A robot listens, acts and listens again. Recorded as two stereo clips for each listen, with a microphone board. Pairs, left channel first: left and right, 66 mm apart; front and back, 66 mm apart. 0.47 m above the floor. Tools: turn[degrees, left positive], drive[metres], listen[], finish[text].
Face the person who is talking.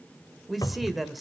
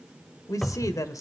Action: finish[Found it: a man speaking, straight ahead.]